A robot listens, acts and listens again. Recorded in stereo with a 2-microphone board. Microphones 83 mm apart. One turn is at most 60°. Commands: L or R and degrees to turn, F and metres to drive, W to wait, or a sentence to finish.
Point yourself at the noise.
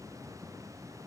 W
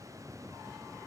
W
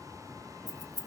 L50
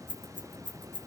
L60
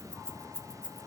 L10
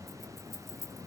Found it: keys jangling, straight ahead, 1 to 2 m away.